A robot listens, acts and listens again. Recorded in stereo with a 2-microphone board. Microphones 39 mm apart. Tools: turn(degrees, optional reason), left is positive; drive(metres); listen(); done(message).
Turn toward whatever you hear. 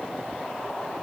listen()
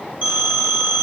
turn(degrees=-55, reason="The phone ringing: about 55° right or 125° right.")
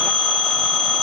done("Found it: a phone ringing, straight ahead.")